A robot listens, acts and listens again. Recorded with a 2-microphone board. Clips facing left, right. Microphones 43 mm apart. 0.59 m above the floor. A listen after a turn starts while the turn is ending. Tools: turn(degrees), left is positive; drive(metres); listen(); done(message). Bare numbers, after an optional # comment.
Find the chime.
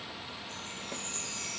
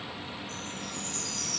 # The chime: about 25° left or 155° left.
turn(25)
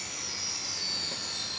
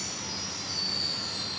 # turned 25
# So it is at 130° left.
turn(130)
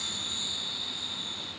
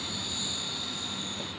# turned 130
listen()
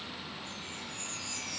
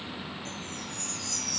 # The chime is now 20° left.
turn(20)
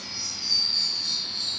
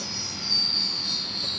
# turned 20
done("Found it: a chime, straight ahead, 2 to 4 m away.")